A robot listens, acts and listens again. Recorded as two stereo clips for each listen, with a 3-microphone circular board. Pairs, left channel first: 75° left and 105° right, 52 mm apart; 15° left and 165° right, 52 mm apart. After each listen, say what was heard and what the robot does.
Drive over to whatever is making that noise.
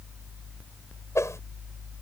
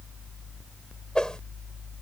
The whoosh: 90° left. Turn 90° left.
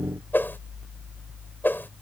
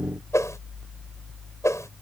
The whoosh is now 25° left. Turn 25° left.
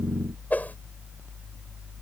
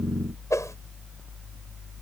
The whoosh is now 20° left. Turn 20° left.
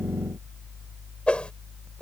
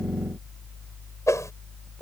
Drive 1.0 m forward.
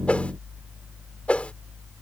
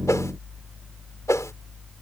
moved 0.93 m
The whoosh is now 10° left. Turn 10° left.
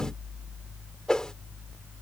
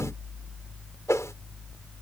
Drive 1.0 m forward.
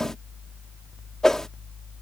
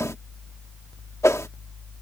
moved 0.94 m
Drive 1.0 m forward.
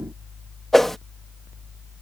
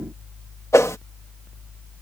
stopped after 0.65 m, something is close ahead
The whoosh is now 10° right. Turn 10° right.
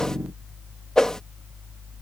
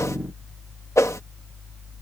I am next to the whoosh.